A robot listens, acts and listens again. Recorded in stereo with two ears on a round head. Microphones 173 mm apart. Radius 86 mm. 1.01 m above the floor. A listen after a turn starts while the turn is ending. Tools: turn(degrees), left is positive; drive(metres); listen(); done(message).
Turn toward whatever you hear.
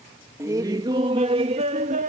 turn(degrees=-40)
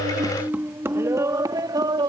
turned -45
turn(degrees=-25)
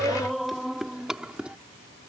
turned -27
done("Facing the laughter.")